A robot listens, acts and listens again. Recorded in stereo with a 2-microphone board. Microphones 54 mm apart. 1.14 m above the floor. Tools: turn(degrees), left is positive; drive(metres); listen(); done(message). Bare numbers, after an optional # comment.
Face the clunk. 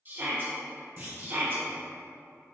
# The clunk: about 40° right or 140° right.
turn(-40)
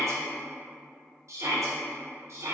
listen()
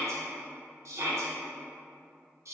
done("I heard a clunk, but can't make it out now. It was about straight ahead or 100° right.")